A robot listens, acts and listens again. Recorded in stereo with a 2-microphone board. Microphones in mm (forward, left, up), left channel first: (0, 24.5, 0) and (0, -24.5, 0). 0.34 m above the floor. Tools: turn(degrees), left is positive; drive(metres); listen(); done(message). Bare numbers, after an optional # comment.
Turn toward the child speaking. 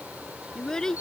turn(30)
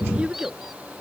# So it is at 20° right.
turn(-20)
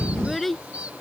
done("Found it: a child speaking, straight ahead.")